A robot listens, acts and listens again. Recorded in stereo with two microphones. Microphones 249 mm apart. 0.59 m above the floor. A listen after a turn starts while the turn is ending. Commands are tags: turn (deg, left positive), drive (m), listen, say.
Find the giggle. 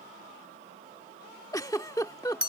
<turn deg="30"/>
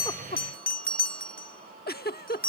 <turn deg="135"/>
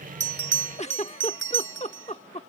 <turn deg="30"/>
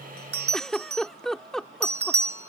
<say>Facing the giggle.</say>